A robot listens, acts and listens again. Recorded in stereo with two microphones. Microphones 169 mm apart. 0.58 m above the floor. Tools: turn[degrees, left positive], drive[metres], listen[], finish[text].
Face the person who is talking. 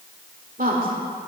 Thought: The woman speaking: about 55° right or 125° right.
Action: turn[-55]
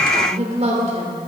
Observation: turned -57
Thought: So it is at 50° right.
Action: turn[-50]
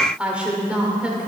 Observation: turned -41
Thought: The woman speaking is now 10° right.
Action: turn[-10]
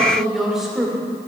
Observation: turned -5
Action: finish[Found it: a woman speaking, straight ahead, 2 to 4 m away.]